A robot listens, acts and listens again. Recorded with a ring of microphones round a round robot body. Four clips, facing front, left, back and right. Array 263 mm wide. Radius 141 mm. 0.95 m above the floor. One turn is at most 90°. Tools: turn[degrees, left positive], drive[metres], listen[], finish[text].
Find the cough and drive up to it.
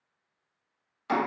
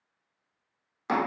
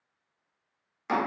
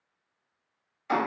Action: listen[]
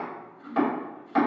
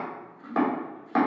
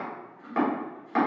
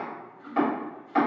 Action: listen[]
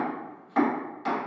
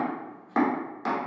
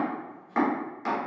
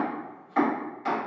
Action: finish[I can't make out a cough, only chopping.]